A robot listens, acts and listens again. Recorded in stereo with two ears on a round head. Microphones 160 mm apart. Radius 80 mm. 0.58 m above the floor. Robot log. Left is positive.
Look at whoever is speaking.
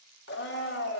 cmd idle
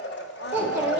cmd yaw -30
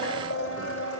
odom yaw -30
cmd idle
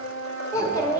note: So it is at 20° left.
cmd yaw +20
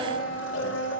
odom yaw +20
cmd idle
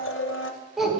end: Facing the child speaking, 1 to 2 m away.